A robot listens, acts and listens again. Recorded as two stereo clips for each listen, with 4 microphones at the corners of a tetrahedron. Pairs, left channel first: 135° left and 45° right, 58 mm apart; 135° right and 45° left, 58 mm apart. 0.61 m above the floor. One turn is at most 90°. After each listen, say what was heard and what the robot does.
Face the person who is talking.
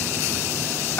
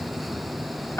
Keep listening.
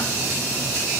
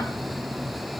Keep listening.
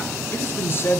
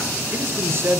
The man speaking: 85° left. Turn 85° left.
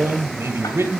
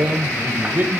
Facing the man speaking.